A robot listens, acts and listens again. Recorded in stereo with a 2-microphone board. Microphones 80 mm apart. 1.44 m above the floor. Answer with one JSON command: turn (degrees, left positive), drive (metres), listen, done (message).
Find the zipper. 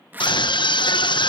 {"turn": -25}
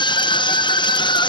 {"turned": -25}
{"listen": true}
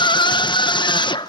{"listen": true}
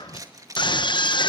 {"turn": -130}
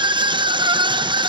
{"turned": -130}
{"listen": true}
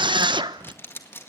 {"turn": 30}
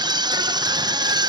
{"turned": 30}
{"listen": true}
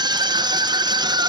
{"listen": true}
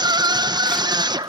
{"done": "I heard a zipper from this way, but can't make it out now."}